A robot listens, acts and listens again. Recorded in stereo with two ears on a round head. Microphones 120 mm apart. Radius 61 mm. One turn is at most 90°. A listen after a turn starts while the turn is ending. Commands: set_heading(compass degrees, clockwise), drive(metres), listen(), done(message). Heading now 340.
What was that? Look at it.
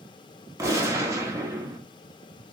set_heading(0)
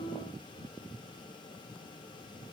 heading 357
listen()
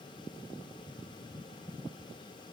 done("I heard a gunshot, but can't make it out now. It was about 5° right or 140° right.")